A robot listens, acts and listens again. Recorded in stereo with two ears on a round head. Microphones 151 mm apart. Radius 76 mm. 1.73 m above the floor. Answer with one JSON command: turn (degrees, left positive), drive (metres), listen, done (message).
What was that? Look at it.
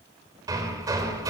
{"turn": -20}
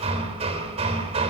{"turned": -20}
{"turn": -140}
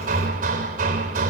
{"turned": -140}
{"turn": -55}
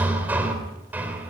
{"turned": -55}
{"turn": -10}
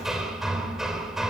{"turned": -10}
{"done": "Facing the hammering, 2 to 4 m away."}